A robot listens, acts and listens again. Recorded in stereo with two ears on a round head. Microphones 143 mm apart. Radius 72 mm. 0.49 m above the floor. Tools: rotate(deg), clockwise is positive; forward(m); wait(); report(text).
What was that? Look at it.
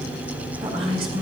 rotate(35)
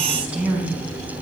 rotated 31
rotate(10)
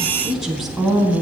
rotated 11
report("Facing the woman speaking.")